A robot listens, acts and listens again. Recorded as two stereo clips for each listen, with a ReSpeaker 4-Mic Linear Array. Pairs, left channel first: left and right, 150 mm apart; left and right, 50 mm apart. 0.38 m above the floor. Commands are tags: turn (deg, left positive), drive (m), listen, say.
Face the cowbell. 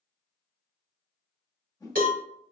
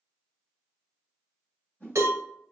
<turn deg="-90"/>
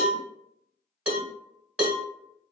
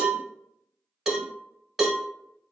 <turn deg="-10"/>
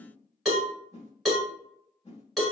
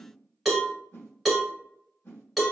<say>Found it: a cowbell, straight ahead, under 1 m away.</say>